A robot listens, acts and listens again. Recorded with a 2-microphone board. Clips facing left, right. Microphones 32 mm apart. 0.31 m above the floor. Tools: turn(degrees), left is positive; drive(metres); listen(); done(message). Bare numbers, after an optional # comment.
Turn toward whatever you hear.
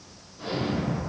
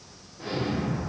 # The explosion: about 40° left or 140° left.
turn(40)
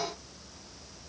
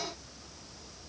listen()
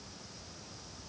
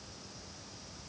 done("I heard an explosion, but can't make it out now. It was about straight ahead or 100° left.")